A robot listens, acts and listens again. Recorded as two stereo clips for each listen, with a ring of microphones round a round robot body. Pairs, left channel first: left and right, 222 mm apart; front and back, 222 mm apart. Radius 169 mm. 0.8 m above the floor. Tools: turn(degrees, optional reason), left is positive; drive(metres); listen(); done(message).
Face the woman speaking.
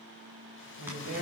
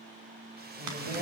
turn(degrees=-110, reason="The woman speaking: 110° right.")
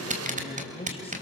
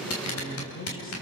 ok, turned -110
turn(degrees=25, reason="The woman speaking is now 25° left.")
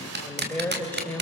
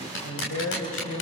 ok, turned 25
done("Found it: a woman speaking, straight ahead.")